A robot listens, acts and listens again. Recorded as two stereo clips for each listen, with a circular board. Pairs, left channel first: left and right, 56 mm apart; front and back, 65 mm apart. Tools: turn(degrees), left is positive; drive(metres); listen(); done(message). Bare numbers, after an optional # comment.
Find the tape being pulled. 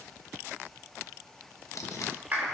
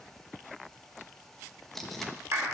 # The tape being pulled: 85° left.
turn(85)
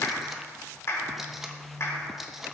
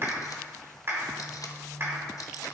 done("Facing the tape being pulled, 1 to 2 m away.")